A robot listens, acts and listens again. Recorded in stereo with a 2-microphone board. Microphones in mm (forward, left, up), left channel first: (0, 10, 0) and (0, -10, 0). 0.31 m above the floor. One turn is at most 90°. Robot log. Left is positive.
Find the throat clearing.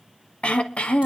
cmd yaw +90
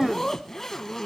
end: Found it: throat clearing, straight ahead, under 1 m away.